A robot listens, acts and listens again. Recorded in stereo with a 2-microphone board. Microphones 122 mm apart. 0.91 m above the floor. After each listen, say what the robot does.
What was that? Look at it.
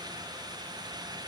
Keep listening.
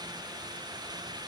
Keep listening.
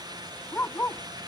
Turn 15° left.
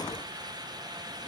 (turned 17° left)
Keep listening.
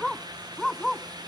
Found it: a dog barking, straight ahead.